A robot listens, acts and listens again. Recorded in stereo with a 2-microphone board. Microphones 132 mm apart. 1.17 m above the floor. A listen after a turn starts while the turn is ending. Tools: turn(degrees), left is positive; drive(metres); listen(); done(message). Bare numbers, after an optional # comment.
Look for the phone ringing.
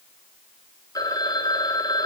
# The phone ringing: about 30° left or 150° left.
turn(30)
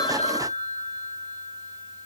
# So it is at 125° left.
turn(125)
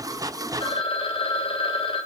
# The phone ringing is now 45° left.
turn(45)
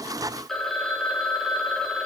done("Found it: a phone ringing, straight ahead.")